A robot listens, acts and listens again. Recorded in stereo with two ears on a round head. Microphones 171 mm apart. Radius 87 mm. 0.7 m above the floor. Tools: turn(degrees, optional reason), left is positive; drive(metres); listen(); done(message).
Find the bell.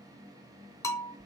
turn(degrees=15, reason="The bell: about 15° left or 165° left.")
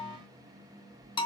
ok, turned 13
turn(degrees=150, reason="So it is at 150° left.")
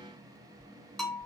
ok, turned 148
done("Found it: a bell, straight ahead, 2 to 4 m away.")